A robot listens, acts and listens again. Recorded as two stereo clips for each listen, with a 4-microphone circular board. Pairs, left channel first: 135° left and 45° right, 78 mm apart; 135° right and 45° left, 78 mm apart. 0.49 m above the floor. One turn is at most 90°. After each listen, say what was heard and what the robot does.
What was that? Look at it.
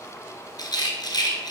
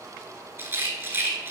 The rattle: 105° left. Turn 90° left.
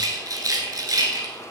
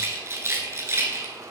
The rattle is now 10° right. Turn 10° right.
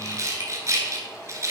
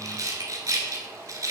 Facing the rattle.